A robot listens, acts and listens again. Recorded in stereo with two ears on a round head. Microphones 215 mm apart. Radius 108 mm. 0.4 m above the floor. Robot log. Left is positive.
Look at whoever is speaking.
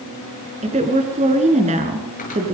note: The woman speaking: about 30° right or 150° right.
cmd yaw -30
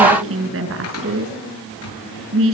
note: So it is at 120° right.
cmd yaw -120
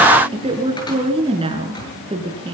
note: The woman speaking is now 25° right.
cmd yaw -25
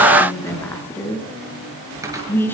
note: The woman speaking is now 10° left.
cmd yaw +10
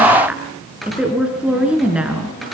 end: Found it: a woman speaking, straight ahead, over 4 m away.